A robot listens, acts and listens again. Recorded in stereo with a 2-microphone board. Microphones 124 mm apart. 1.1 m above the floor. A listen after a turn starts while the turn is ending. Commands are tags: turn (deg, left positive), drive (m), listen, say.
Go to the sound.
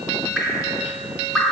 <turn deg="-30"/>
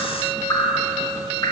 <turn deg="25"/>
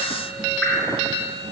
<drive m="1.0"/>
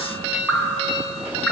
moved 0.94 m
<turn deg="10"/>
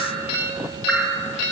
<drive m="1.0"/>
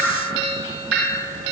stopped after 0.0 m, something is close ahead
<say>I am next to the dripping.</say>